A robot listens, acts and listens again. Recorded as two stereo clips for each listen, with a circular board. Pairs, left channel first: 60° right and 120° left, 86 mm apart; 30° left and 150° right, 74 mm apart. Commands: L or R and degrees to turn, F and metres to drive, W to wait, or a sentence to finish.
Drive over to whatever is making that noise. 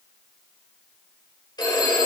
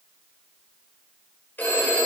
R35
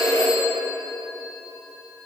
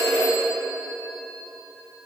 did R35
R15
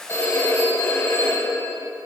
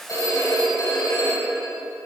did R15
F1.0
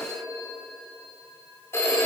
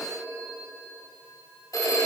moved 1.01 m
F1.0
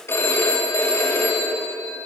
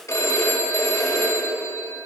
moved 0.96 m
F1.0
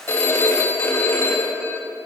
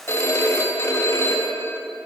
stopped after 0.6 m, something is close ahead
R10
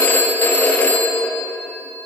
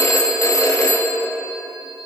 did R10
Arrived at the phone ringing, straight ahead.